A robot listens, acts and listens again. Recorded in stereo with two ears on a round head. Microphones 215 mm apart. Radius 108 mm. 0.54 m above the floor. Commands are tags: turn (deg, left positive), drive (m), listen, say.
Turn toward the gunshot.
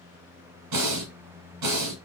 <listen/>
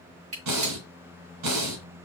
<turn deg="-30"/>
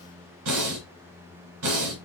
<listen/>
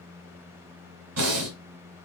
<say>I heard a gunshot, but can't make it out now. It was about straight ahead or 120° right.</say>